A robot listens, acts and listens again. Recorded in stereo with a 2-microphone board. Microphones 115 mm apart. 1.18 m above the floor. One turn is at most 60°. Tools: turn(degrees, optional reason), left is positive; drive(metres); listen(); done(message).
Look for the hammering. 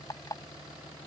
listen()
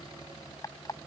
listen()
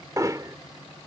turn(degrees=-30, reason="The hammering: about 30° right or 150° right.")
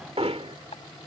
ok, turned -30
turn(degrees=-60, reason="So it is at 120° right.")
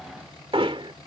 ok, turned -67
turn(degrees=-50, reason="The hammering is now 50° right.")
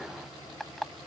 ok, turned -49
listen()
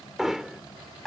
done("Facing the hammering.")